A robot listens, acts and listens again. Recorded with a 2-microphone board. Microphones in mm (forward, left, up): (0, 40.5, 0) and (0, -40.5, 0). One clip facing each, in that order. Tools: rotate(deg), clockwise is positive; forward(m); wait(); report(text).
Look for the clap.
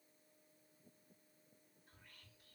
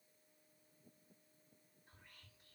wait()
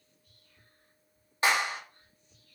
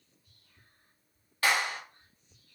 rotate(-25)
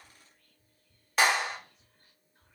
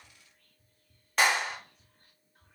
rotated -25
report("Found it: a clap, straight ahead.")